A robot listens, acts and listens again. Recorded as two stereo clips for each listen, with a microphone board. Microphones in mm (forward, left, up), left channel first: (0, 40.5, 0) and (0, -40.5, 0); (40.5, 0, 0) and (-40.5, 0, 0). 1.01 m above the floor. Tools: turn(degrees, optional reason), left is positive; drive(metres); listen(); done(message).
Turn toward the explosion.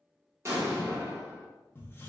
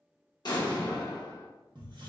turn(degrees=-35, reason="The explosion: 35° right.")
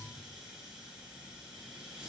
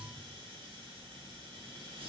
done("I heard an explosion from this way, but can't make it out now.")